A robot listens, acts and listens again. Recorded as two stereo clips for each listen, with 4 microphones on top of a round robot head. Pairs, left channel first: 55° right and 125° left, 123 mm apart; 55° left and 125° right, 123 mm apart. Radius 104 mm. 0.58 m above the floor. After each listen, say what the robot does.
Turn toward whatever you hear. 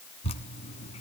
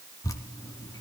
Turn 10° right.
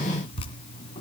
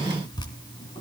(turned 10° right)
Found it: dripping, straight ahead, 1 to 2 m away.